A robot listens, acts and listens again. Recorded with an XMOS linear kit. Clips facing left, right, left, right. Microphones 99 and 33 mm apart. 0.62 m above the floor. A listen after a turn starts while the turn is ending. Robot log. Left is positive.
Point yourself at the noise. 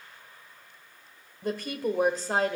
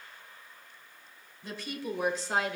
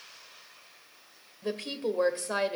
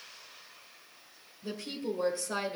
note: The woman speaking: about 40° left or 140° left.
cmd yaw +40
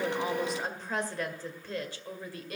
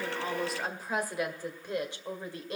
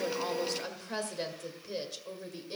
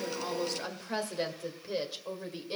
note: So it is at 25° right.
cmd yaw -25
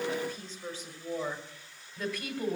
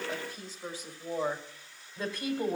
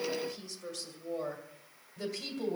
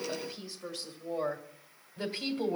note: The woman speaking is now 25° right.
cmd yaw -25
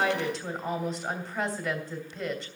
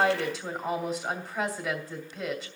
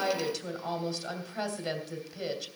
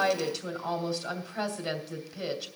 end: Found it: a woman speaking, straight ahead.